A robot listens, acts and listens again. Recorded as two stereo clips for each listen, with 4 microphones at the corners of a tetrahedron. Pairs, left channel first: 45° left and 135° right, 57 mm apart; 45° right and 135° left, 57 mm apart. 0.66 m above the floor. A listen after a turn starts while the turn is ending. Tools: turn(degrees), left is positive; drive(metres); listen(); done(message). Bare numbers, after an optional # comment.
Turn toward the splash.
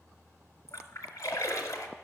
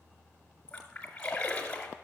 # The splash: 30° left.
turn(30)
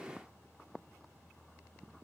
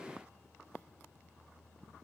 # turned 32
done("I heard a splash from this way, but can't make it out now.")